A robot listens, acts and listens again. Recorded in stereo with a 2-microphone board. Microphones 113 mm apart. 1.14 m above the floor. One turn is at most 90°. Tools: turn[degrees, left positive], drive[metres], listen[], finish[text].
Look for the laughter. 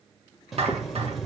Action: listen[]
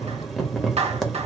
Action: listen[]
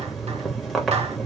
Action: finish[I can't make out laughter to turn to.]